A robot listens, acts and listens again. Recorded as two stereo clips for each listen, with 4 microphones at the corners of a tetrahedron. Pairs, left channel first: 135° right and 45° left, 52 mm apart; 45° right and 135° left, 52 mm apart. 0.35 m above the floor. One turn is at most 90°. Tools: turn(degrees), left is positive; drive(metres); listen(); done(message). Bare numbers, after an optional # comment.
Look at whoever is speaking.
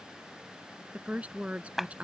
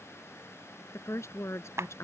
# The woman speaking: 20° right.
turn(-20)
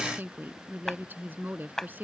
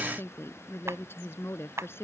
done("Found it: a woman speaking, straight ahead.")